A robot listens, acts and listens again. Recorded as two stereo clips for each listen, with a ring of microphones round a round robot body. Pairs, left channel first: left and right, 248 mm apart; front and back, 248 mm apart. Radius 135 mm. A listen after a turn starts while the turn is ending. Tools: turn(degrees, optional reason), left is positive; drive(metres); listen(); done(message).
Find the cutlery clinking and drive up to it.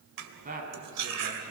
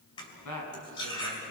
turn(degrees=-75, reason="The cutlery clinking: 75° right.")
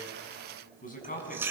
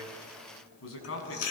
turn(degrees=-10, reason="The cutlery clinking is now 10° right.")
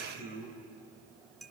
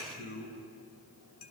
drive(metres=1.0)
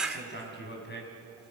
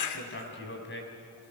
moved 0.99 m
drive(metres=1.0)
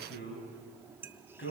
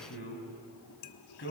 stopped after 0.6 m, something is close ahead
turn(degrees=-10, reason="The cutlery clinking is now 10° right.")
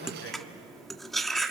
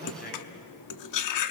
done("I am next to the cutlery clinking.")